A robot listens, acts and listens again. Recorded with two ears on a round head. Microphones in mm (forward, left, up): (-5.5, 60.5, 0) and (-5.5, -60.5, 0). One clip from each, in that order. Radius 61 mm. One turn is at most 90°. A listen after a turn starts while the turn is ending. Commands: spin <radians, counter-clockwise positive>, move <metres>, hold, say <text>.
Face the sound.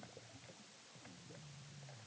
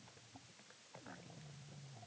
hold
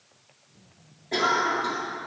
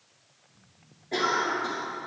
spin 0.35
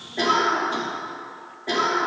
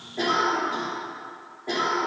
spin 1.57
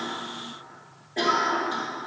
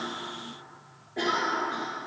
spin 1.31
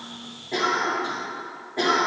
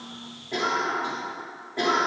say Facing the cough, 2 to 4 m away.